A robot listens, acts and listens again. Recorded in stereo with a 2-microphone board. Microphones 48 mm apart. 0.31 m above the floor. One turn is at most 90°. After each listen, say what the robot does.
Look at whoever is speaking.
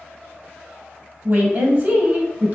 Turn 30° right.
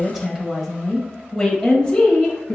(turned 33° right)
Turn 30° left.
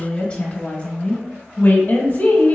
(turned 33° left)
Turn 35° left.
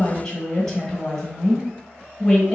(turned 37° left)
Facing the woman speaking, 1 to 2 m away.